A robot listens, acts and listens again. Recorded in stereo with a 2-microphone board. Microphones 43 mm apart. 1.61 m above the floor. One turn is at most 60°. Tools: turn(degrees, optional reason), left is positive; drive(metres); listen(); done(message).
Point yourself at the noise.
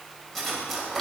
turn(degrees=30)
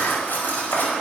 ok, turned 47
turn(degrees=60, reason="So it is at 125° left.")
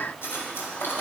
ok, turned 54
turn(degrees=60, reason="The cutlery clinking is now 75° left.")
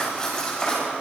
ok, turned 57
turn(degrees=15, reason="The cutlery clinking is now 15° left.")
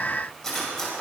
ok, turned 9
turn(degrees=10, reason="The cutlery clinking is now 10° left.")
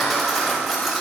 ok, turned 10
done("Found it: cutlery clinking, straight ahead, over 4 m away.")